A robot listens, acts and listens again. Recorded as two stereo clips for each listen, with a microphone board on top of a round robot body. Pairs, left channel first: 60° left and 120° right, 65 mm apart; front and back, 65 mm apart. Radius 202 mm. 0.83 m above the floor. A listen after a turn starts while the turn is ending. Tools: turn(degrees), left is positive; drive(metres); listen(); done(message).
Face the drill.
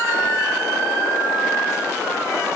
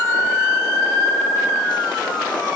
listen()
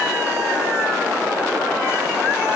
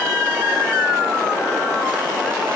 listen()
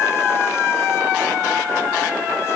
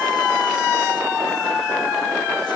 done("I can't make out a drill to turn to.")